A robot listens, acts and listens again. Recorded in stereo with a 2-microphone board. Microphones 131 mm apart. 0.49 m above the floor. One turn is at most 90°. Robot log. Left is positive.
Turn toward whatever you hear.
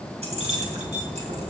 note: The keys jangling: about 55° right or 125° right.
cmd yaw -55
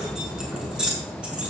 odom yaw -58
end: Found it: keys jangling, straight ahead.